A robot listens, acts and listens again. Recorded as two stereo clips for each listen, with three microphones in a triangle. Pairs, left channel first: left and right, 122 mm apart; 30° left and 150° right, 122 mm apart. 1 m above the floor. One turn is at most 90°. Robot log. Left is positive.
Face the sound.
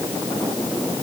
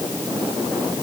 cmd idle
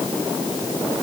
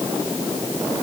cmd idle
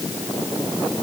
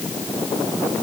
end: I can't make out anything.